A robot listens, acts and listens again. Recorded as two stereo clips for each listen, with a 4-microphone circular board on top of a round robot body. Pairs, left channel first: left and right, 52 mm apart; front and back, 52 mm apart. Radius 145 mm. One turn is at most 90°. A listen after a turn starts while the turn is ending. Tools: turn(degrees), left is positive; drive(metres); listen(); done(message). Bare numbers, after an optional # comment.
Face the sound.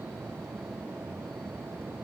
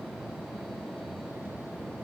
listen()
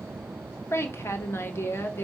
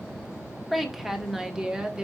# The woman speaking: 110° left.
turn(90)
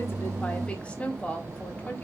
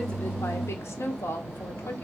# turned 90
# The woman speaking is now 35° left.
turn(35)
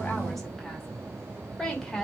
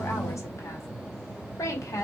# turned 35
# The woman speaking is now 10° left.
turn(10)
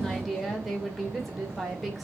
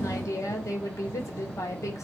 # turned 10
done("Facing the woman speaking, 2 to 4 m away.")